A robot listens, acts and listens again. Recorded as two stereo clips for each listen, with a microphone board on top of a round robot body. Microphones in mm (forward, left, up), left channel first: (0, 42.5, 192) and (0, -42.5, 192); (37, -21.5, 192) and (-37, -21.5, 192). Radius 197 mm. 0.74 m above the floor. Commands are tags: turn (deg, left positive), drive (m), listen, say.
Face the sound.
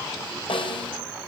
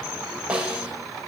<turn deg="105"/>
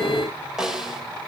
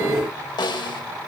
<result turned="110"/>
<say>Facing the snare drum.</say>